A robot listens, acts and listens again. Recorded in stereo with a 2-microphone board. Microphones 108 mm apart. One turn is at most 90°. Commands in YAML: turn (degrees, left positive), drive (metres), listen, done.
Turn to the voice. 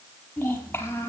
turn: 20
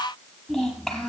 done: "Found it: a child speaking, straight ahead, over 4 m away."